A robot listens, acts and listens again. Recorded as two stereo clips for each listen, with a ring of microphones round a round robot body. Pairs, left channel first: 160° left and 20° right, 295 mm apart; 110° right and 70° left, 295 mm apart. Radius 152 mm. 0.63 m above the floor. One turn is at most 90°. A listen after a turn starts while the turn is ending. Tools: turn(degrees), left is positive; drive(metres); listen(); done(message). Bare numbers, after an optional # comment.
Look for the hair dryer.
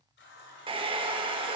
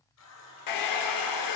# The hair dryer: 95° right.
turn(-90)
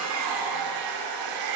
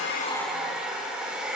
# The hair dryer is now 20° right.
turn(-20)
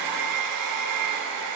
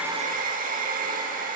done("Facing the hair dryer.")